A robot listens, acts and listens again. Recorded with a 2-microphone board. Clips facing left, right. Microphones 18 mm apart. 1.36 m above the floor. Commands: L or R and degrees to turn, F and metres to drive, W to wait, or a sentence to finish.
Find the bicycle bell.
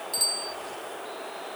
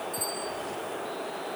L75
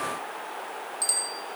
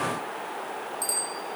L35
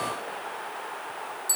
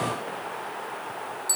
R15
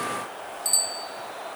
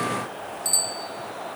Facing the bicycle bell.